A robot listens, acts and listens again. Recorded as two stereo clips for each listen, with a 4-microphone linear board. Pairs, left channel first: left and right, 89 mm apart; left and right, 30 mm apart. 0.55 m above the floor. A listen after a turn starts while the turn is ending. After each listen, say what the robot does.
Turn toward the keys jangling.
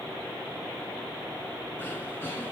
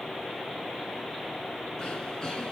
Keep listening.
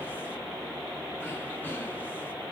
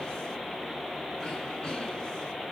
Keep listening.
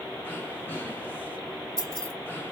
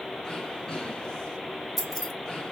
Turn 30° left.
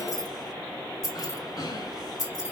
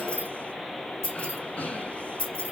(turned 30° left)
Turn 135° left.
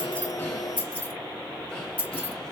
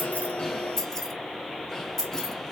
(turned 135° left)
Turn 15° left.
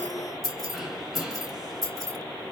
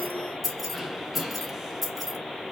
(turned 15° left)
Facing the keys jangling.